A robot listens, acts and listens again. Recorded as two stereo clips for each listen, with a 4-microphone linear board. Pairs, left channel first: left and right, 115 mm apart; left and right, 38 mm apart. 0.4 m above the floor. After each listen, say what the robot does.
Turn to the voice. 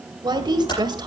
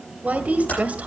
Turn 40° right.
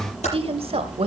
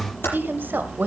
Turn 90° right.
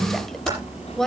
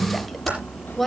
Facing the woman speaking, 1 to 2 m away.